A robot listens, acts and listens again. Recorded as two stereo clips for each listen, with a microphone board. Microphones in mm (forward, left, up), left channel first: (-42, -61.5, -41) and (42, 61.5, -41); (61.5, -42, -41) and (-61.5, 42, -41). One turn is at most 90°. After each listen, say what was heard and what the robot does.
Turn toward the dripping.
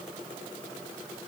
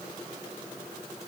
Keep listening.
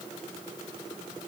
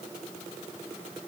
Keep listening.
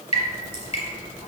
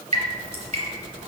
The dripping: 175° right. Turn 90° right.
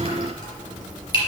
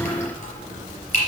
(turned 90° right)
The dripping is now 70° right. Turn 70° right.
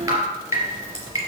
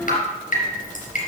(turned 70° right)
The dripping is now 15° right. Turn 15° right.
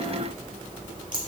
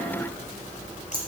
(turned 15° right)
Found it: dripping, straight ahead.